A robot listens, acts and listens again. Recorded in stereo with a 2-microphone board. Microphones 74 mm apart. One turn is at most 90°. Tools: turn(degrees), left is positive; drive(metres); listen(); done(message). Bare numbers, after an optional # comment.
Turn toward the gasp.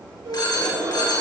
turn(-90)
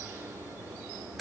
done("I heard a gasp from this way, but can't make it out now.")